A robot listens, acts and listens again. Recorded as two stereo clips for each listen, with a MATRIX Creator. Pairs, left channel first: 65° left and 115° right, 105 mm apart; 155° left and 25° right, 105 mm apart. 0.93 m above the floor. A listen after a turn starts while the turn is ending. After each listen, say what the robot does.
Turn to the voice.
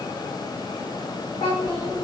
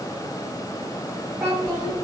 Turn 45° left.
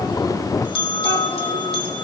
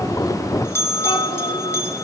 Keep listening.
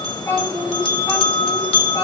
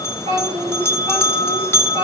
Facing the child speaking.